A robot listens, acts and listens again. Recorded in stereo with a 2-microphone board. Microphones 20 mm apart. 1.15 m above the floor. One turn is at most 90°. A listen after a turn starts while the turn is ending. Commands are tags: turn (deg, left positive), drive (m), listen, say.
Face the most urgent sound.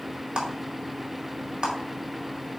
<listen/>
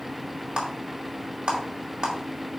<listen/>
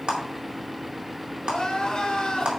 <turn deg="35"/>
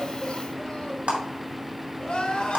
<turn deg="90"/>
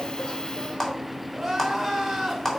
<say>Found it: crying, straight ahead, 2 to 4 m away.</say>